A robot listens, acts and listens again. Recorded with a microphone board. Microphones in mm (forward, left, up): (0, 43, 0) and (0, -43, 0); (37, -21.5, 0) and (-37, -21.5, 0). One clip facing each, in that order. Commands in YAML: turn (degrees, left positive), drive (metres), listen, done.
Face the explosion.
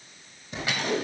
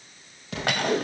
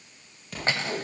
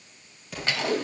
turn: -90
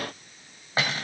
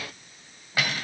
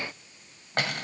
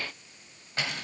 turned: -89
done: "Facing where the explosion came from. I can't hear it now."